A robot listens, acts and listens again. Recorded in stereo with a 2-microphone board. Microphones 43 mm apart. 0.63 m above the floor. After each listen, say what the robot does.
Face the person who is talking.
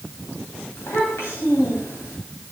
Turn 90° left.
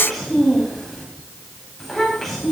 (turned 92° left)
Found it: a child speaking, straight ahead.